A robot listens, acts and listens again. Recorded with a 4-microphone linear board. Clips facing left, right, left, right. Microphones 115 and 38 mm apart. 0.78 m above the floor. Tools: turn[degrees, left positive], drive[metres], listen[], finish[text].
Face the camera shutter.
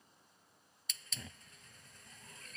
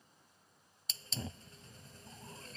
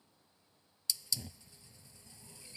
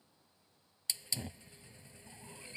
Action: listen[]
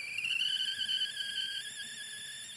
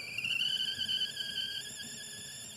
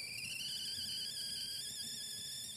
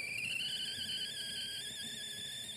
Action: listen[]
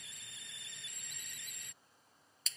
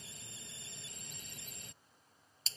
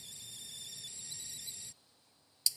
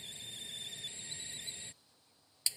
Action: finish[I can't make out a camera shutter to turn to.]